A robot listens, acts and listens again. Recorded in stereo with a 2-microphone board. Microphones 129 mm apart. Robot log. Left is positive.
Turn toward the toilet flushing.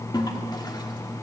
note: The toilet flushing: about 35° left or 145° left.
cmd yaw +35
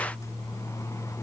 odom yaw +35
cmd idle
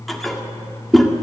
end: Found it: a toilet flushing, straight ahead, 1 to 2 m away.